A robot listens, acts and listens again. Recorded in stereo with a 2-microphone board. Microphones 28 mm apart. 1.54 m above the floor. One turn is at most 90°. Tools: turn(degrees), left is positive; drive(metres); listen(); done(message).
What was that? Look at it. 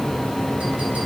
listen()
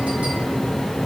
listen()
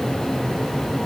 done("I can't make out anything.")